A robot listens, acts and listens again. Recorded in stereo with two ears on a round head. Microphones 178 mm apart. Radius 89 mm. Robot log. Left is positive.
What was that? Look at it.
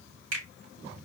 cmd yaw -90
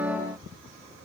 cmd idle
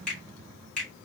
end: Found it: a finger snap, straight ahead.